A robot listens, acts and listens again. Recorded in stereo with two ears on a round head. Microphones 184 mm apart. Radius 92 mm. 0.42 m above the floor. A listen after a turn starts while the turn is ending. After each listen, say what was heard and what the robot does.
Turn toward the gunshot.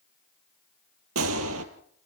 Turn 90° right.
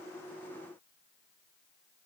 I heard a gunshot from this way, but can't make it out now.